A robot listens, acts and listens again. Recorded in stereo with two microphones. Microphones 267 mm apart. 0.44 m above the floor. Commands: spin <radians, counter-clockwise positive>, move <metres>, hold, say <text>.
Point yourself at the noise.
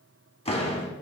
spin 0.35
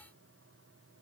hold
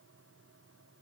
say I heard a door slam, but can't make it out now. It was about straight ahead or 140° left.